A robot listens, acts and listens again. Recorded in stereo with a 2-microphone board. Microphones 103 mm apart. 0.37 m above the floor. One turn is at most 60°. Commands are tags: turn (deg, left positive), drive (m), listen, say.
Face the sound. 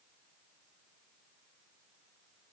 <listen/>
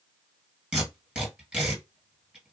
<turn deg="-30"/>
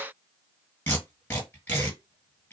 <turn deg="20"/>
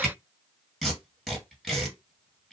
<say>Found it: tape being pulled, straight ahead, 1 to 2 m away.</say>